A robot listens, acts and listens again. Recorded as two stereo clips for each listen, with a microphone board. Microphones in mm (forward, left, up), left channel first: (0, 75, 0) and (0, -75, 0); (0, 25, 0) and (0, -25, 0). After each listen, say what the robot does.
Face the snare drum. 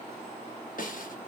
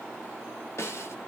Turn 65° left.
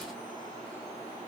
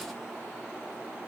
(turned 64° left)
Keep listening.
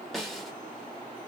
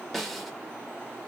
Found it: a snare drum, straight ahead.